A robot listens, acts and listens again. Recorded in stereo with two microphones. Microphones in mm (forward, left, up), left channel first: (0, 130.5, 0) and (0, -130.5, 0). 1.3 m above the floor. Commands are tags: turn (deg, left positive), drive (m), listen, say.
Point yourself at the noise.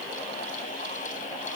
<listen/>
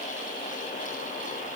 <listen/>
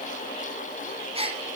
<turn deg="-20"/>
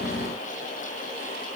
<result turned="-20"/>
<listen/>
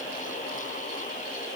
<say>I heard a gasp, but can't make it out now. It was about straight ahead or 140° right.</say>